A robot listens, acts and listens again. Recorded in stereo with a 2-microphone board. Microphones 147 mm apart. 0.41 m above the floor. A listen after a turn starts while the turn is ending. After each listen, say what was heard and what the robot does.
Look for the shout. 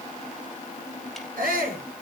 Turn 90° right.
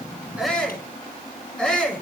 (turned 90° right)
Found it: a shout, straight ahead, over 4 m away.